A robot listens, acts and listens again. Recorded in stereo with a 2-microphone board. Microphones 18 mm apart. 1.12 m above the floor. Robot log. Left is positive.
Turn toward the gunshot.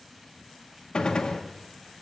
note: The gunshot: about 55° left or 125° left.
cmd yaw +55
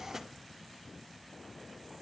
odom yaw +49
cmd idle
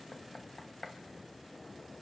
end: I heard a gunshot, but can't make it out now. It was about 5° left or 75° left.